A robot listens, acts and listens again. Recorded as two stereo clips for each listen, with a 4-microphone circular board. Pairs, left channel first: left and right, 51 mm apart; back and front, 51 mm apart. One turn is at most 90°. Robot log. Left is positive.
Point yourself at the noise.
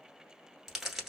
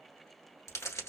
note: The crumpling: 175° right.
cmd yaw -90
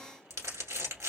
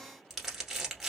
note: The crumpling is now 85° right.
cmd yaw -85
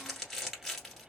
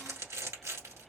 end: Facing the crumpling.